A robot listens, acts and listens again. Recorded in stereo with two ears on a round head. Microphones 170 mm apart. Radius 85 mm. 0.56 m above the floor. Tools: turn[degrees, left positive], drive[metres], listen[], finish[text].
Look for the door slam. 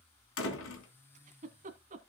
Action: turn[90]
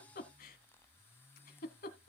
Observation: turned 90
Action: finish[I heard a door slam from this way, but can't make it out now.]